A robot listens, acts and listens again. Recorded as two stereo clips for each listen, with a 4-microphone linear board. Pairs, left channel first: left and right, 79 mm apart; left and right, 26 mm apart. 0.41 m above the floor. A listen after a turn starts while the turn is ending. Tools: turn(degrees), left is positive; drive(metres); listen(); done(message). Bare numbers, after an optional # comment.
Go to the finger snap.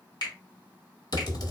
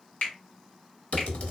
# The finger snap: about 65° left or 115° left.
turn(65)
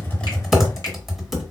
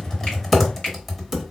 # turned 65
listen()
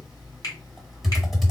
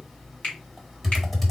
# So it is at 50° left.
turn(50)
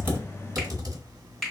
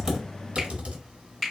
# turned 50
drive(1.0)
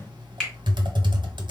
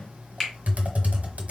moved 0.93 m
drive(1.0)
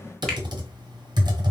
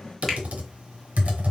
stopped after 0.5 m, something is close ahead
listen()
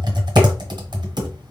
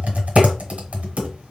listen()
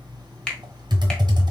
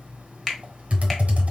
# The finger snap is now 10° left.
turn(10)
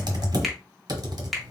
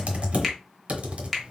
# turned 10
done("Arrived at the finger snap, straight ahead.")